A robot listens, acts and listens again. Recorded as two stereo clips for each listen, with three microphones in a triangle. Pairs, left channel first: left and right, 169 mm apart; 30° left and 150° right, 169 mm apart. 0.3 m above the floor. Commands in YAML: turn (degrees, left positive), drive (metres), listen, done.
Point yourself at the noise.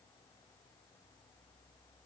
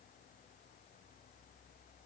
listen: true
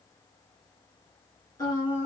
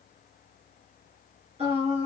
turn: 160
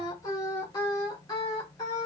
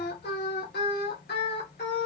turn: 25
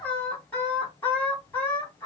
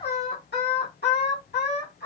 turn: 10
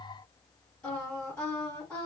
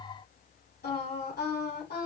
done: "Facing the singing."